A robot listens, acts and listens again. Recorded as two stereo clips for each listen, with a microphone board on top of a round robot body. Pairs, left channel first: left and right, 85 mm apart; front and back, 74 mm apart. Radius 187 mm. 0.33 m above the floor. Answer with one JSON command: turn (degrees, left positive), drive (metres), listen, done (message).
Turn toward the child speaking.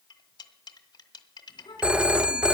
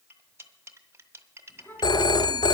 {"turn": 65}
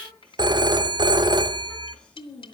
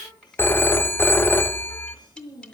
{"turn": 10}
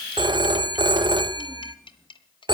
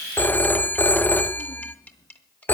{"listen": true}
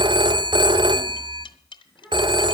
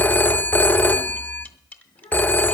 {"done": "Facing the child speaking, over 4 m away."}